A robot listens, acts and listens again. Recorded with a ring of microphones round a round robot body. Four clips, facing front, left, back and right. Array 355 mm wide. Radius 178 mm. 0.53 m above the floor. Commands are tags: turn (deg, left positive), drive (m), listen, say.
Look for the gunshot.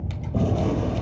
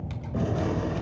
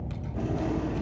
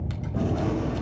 <turn deg="25"/>
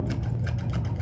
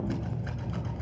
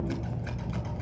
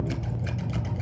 <say>Facing where the gunshot came from. I can't hear it now.</say>